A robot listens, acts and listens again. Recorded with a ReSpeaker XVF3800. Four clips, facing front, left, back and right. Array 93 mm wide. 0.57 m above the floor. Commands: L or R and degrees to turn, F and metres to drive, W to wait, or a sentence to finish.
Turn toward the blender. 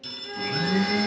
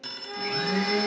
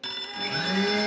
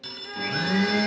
R100
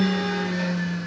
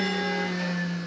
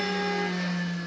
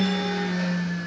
Found it: a blender, straight ahead.